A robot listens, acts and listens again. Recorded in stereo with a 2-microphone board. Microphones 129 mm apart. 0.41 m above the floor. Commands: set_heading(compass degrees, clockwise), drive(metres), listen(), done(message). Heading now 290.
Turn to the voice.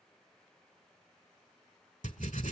listen()
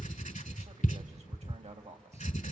set_heading(350)
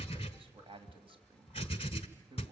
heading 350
set_heading(40)
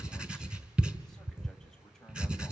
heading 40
listen()
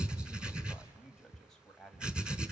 done("Facing the man speaking.")